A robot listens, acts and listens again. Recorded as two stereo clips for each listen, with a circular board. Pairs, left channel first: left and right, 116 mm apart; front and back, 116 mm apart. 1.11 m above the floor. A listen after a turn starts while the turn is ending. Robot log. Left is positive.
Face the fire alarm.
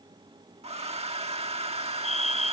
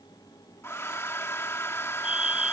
note: The fire alarm: 100° left.
cmd yaw +100
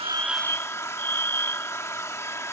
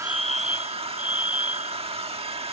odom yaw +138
note: The fire alarm is now 40° right.
cmd yaw -40
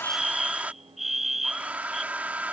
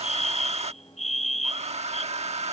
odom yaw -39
end: Found it: a fire alarm, straight ahead.